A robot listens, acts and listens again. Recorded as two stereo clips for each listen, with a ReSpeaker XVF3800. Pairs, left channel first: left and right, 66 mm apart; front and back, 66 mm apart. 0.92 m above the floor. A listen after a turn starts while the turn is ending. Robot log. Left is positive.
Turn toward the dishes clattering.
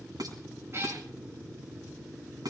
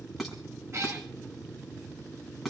note: The dishes clattering: 90° right.
cmd yaw -90
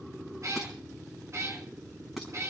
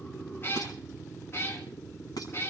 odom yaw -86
end: Found it: dishes clattering, straight ahead, over 4 m away.